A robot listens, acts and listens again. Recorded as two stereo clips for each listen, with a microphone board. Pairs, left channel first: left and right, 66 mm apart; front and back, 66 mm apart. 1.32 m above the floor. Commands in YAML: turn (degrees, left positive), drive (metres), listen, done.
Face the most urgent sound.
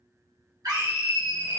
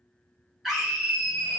turn: -90
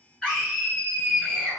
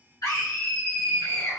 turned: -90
turn: 15
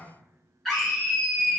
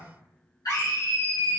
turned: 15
done: "Facing the scream, 1 to 2 m away."